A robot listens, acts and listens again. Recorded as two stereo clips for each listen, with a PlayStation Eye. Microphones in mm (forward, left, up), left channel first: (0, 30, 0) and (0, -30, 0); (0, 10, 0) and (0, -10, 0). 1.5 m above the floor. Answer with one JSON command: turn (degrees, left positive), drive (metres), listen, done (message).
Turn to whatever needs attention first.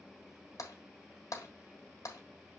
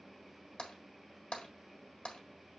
{"listen": true}
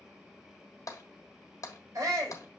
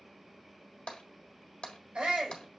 {"turn": -90}
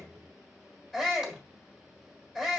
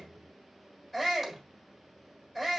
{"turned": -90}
{"done": "Facing the shout, 2 to 4 m away."}